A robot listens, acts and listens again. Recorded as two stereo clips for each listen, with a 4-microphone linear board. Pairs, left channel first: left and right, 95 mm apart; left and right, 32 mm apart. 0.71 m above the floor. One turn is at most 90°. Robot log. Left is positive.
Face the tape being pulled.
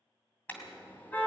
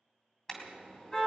cmd idle
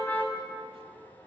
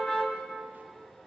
cmd idle
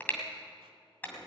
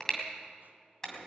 end: I can't make out tape being pulled, only a car horn.